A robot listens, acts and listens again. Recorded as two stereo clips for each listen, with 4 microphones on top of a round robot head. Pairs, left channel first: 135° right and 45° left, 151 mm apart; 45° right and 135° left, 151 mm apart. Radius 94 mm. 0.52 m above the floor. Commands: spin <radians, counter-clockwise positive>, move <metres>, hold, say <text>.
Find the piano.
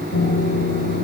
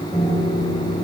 spin -2.27
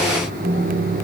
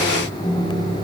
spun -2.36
say Found it: a piano, straight ahead.